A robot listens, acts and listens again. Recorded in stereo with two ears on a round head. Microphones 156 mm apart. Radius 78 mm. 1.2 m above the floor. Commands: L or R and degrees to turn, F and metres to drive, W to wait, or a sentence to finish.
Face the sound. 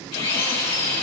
L35
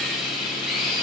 Found it: a drill, straight ahead, over 4 m away.